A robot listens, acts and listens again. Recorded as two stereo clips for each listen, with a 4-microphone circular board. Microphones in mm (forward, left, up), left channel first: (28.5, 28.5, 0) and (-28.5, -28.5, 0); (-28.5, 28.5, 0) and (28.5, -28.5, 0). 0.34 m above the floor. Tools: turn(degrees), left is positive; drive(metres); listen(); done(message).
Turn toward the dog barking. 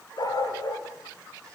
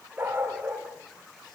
turn(degrees=20)
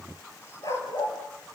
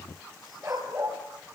turn(degrees=10)
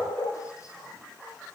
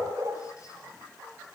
done("Facing the dog barking.")